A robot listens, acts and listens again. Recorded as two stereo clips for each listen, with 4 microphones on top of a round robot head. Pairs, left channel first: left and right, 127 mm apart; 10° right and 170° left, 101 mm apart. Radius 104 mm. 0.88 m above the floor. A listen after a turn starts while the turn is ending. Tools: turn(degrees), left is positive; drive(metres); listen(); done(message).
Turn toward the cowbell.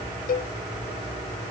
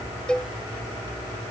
turn(degrees=75)
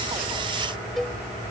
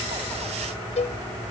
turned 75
done("Found it: a cowbell, straight ahead.")